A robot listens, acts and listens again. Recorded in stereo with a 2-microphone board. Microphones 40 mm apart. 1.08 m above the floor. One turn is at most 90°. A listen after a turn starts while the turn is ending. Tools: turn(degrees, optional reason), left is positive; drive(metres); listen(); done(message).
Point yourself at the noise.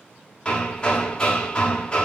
turn(degrees=20, reason="The hammering: about 20° left or 160° left.")
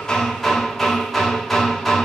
done("Found it: hammering, straight ahead, 1 to 2 m away.")